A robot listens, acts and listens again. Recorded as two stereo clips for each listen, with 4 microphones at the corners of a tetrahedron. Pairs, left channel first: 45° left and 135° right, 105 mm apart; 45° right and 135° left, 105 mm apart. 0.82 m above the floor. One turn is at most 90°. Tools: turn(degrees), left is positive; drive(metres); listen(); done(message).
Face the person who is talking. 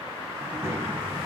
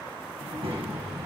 turn(degrees=90)
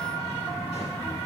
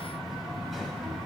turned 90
turn(degrees=45)
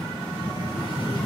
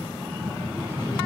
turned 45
done("Found it: a child speaking, straight ahead, over 4 m away.")